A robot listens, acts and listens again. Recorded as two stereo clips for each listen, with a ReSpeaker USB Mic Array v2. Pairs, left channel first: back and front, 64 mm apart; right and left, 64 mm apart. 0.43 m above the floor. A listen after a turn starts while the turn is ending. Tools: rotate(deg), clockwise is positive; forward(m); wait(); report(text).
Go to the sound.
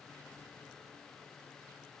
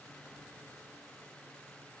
wait()
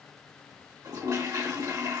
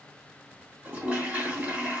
rotate(-25)
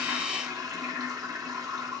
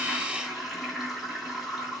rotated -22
forward(1.0)
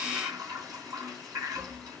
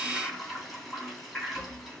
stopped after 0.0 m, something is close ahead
report("Something is in my way. I am facing the toilet flushing but have not reached it.")